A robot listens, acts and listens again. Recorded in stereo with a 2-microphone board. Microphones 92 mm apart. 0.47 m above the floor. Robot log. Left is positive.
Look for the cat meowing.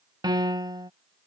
cmd idle
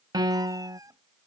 note: The cat meowing: about 35° right or 145° right.
cmd yaw -35
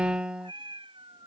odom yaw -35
note: So it is at 120° right.
cmd yaw -120
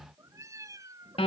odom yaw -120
note: The cat meowing is now 35° right.
cmd yaw -35
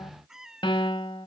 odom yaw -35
end: Found it: a cat meowing, straight ahead.